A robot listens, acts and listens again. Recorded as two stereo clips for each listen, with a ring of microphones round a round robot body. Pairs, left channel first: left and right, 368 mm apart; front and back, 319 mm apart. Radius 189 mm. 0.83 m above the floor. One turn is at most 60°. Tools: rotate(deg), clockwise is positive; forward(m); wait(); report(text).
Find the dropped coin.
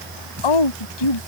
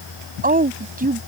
wait()
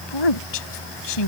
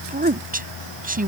wait()
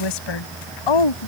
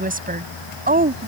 report("I can't make out a dropped coin to turn to.")